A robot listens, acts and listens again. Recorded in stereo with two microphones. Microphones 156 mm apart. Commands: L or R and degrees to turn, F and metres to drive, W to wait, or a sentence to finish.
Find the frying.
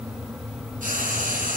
R65
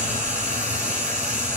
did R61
R55
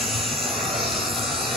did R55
Found it: frying, straight ahead.